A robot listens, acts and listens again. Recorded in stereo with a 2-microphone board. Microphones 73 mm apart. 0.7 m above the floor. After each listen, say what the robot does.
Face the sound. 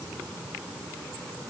Keep listening.
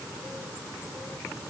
Keep listening.
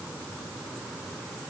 I can't make out anything to turn to.